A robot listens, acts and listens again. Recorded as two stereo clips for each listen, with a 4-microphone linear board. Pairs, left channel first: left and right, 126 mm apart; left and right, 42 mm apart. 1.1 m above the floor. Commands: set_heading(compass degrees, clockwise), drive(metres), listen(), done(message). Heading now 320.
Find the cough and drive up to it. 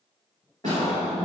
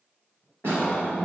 set_heading(285)
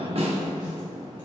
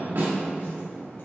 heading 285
listen()
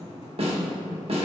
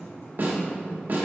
listen()
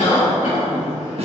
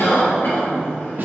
set_heading(175)
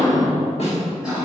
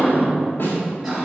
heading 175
set_heading(185)
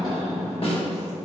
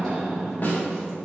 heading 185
drive(1.0)
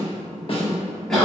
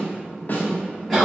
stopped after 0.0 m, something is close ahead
done("Something is in my way. I am facing the cough but have not reached it.")